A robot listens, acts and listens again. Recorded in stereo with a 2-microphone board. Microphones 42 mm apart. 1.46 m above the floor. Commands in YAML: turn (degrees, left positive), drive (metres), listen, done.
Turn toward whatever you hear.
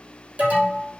turn: -45
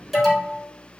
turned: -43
done: "Facing the alarm."